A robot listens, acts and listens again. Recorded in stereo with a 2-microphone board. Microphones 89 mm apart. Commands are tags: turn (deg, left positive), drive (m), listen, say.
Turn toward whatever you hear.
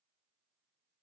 <listen/>
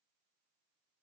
<listen/>
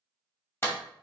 <turn deg="25"/>
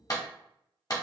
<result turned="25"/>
<turn deg="125"/>
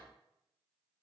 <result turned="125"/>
<listen/>
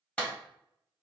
<turn deg="15"/>
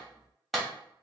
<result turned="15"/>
<say>Found it: a clap, straight ahead, 1 to 2 m away.</say>